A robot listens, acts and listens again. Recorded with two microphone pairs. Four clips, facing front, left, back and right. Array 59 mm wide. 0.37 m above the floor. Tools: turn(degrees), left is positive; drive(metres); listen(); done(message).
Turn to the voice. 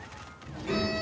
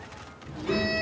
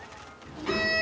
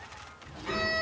turn(degrees=160)
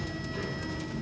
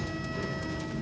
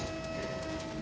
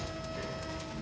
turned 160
turn(degrees=20)
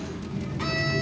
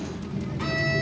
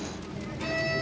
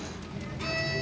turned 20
done("Facing the child speaking, 2 to 4 m away.")